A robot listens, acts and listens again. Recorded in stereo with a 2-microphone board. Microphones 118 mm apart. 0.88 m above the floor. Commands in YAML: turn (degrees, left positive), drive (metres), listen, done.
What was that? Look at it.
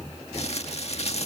turn: 60
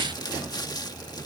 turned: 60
turn: 40
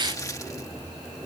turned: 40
listen: true
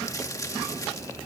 listen: true
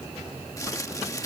turn: 30
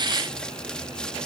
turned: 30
listen: true
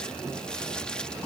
listen: true
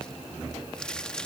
turn: 10
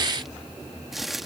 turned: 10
done: "Facing the crumpling."